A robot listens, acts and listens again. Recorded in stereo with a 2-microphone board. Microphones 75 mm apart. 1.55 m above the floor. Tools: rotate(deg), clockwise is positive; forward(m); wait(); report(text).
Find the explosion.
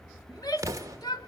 rotate(45)
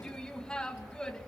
wait()
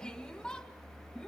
report("I heard an explosion, but can't make it out now. It was about straight ahead or 90° right.")